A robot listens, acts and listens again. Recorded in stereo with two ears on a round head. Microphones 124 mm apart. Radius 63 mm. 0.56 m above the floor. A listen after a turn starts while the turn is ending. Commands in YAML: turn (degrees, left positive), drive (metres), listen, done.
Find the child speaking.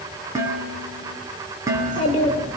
turn: 40
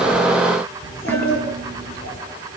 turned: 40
turn: 100
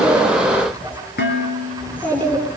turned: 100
turn: 15
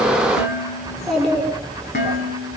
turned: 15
done: "Found it: a child speaking, straight ahead."